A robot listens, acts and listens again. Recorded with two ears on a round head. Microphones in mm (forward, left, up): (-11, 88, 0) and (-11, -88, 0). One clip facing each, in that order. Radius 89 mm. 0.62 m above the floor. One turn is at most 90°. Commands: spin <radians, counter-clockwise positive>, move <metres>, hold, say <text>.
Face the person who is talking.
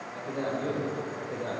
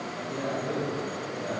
spin 1.13
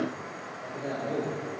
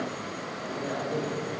spin 0.26
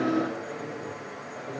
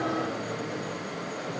say Found it: a man speaking, straight ahead, 2 to 4 m away.